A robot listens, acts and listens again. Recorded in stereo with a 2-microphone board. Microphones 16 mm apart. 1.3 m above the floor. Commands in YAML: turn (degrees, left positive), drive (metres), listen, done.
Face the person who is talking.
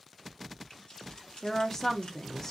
turn: 25
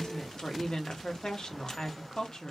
turn: 130
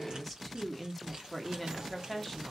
turn: 10
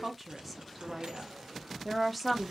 done: "Found it: a woman speaking, straight ahead."